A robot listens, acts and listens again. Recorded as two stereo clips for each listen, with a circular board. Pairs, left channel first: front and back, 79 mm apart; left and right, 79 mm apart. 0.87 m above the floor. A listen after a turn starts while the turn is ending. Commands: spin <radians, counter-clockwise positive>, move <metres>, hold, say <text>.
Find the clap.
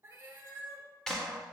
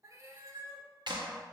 spin -1.40
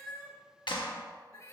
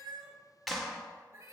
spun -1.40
say Found it: a clap, straight ahead.